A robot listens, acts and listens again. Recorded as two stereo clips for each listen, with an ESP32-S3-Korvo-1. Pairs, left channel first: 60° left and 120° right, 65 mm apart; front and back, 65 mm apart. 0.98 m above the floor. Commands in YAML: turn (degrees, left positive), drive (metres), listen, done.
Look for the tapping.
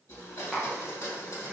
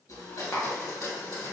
turn: -35
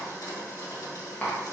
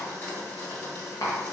done: "Found it: tapping, straight ahead."